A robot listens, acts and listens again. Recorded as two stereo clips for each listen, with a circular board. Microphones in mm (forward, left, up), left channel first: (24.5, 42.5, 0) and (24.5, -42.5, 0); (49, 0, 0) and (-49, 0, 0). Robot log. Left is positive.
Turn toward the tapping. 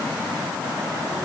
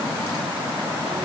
cmd idle
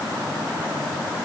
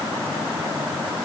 cmd idle
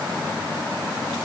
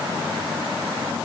end: I can't make out tapping.